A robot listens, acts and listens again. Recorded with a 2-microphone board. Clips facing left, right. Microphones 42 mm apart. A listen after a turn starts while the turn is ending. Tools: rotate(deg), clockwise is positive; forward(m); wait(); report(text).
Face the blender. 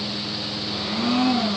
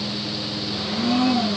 rotate(-30)
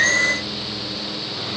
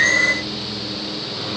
wait()
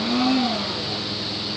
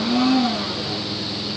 report("Facing the blender.")